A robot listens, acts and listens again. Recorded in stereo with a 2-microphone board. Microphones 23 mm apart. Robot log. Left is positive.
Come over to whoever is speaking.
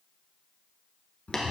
cmd idle
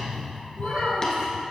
note: The child speaking: about 55° right or 125° right.
cmd yaw -55
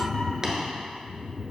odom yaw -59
cmd idle
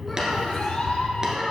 cmd fwd 1.0
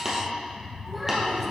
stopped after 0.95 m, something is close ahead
cmd idle
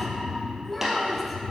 end: I am next to the child speaking.